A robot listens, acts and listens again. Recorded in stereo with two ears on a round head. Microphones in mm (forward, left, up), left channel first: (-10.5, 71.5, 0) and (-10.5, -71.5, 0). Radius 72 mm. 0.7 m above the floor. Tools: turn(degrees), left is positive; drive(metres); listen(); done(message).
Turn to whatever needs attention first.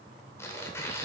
listen()
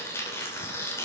listen()
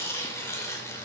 done("I can't make out anything urgent, only tearing paper.")